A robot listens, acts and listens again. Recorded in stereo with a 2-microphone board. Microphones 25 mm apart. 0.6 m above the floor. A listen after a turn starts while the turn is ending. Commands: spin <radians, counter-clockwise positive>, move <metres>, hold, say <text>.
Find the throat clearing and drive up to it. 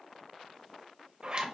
hold
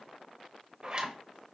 hold
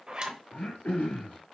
spin 1.57
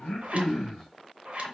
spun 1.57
move 1.0
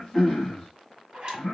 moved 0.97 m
spin 0.17
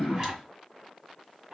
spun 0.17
move 1.0
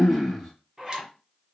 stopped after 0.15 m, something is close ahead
say I am next to the throat clearing.